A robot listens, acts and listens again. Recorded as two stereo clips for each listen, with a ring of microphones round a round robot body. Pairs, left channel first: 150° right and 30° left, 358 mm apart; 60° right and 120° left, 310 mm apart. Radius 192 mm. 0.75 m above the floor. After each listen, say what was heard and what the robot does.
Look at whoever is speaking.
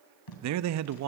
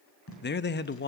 Found it: a man speaking, straight ahead.